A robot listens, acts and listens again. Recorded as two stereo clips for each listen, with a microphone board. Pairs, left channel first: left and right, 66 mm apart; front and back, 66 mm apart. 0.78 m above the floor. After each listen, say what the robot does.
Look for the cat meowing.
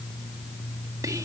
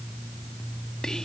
Keep listening.
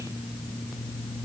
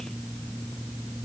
Keep listening.
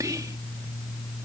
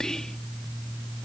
I can't make out a cat meowing, only whispering.